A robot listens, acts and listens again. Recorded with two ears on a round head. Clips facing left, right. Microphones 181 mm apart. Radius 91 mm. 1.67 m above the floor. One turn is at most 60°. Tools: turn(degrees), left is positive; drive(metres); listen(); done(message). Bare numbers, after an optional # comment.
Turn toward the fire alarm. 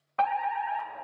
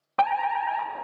# The fire alarm: about 65° right or 115° right.
turn(-60)
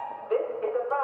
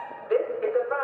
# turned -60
# So it is at 25° right.
turn(-25)
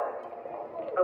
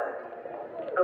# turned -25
# The fire alarm is now 15° right.
turn(-15)
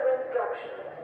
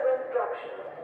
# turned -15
done("Found it: a fire alarm, straight ahead, under 1 m away.")